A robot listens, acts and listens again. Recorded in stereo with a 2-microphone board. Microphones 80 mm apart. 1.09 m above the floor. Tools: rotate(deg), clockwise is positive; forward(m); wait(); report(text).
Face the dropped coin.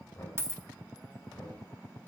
rotate(30)
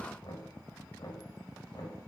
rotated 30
wait()
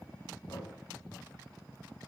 report("I heard a dropped coin, but can't make it out now. It was about straight ahead or 120° right.")